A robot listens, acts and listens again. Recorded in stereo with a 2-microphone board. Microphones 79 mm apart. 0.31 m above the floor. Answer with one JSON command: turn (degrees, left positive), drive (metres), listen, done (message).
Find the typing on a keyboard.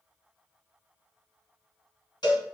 {"listen": true}
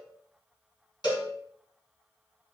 {"listen": true}
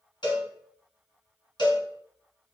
{"done": "I can't make out typing on a keyboard to turn to."}